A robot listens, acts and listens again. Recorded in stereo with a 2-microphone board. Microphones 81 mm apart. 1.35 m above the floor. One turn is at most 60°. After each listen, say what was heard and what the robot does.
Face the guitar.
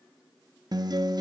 The guitar: about 55° right or 125° right. Turn 55° right.
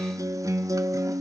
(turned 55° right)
So it is at 55° right. Turn 55° right.
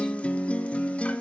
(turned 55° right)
The guitar is now 15° left. Turn 15° left.
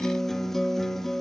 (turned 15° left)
Facing the guitar, 1 to 2 m away.